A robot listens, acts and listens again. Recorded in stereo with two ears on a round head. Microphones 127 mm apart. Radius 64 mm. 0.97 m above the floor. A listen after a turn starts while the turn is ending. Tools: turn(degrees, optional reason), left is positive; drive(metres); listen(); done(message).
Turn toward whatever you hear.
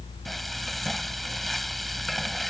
turn(degrees=30)
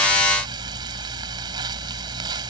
turn(degrees=-30, reason="So it is at 30° right.")
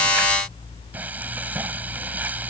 turn(degrees=-10, reason="The frying is now 10° right.")
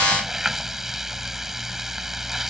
done("Facing the frying.")